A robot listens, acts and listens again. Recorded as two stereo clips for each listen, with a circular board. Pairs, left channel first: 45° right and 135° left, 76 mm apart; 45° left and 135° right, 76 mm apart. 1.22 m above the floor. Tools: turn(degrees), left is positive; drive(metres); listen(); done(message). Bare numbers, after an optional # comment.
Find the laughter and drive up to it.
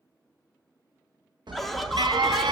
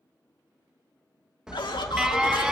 # The laughter: 45° left.
turn(45)
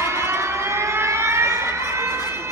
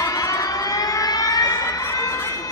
listen()
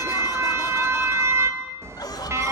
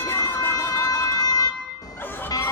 # The laughter is now 20° right.
turn(-20)
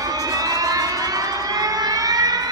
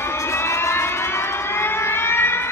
listen()
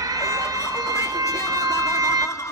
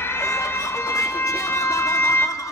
drive(1.0)
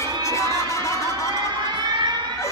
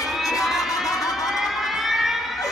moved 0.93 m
drive(1.0)
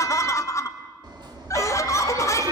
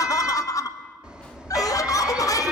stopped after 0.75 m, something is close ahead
done("I am next to the laughter.")